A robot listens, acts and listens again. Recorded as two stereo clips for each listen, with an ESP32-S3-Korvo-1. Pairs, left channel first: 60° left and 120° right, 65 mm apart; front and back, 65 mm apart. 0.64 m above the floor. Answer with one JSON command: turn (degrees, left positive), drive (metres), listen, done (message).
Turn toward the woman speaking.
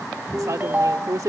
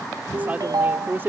{"turn": -130}
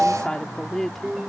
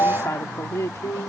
{"turn": -25}
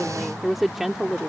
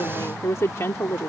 {"turn": -45}
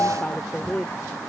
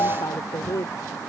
{"turn": -10}
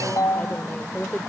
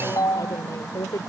{"turn": -10}
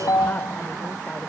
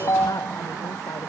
{"listen": true}
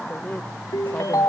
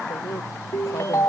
{"listen": true}
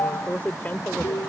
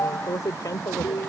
{"done": "Facing the woman speaking."}